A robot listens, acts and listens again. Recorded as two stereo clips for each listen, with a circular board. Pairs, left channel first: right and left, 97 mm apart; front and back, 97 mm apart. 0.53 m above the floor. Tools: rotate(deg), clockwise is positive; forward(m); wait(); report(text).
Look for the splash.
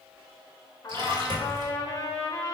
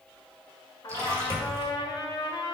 rotate(-125)
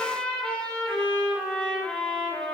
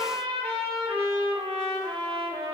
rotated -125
report("I heard a splash from this way, but can't make it out now.")